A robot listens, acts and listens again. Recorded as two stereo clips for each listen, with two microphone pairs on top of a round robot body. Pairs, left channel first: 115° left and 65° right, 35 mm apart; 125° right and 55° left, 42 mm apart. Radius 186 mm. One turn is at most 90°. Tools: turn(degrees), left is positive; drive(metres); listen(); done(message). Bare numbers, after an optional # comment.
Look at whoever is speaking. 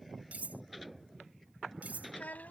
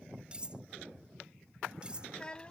# The child speaking: 165° left.
turn(90)
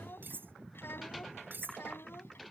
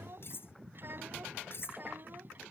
# The child speaking is now 100° left.
turn(90)
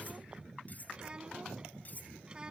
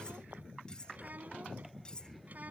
done("Found it: a child speaking, straight ahead.")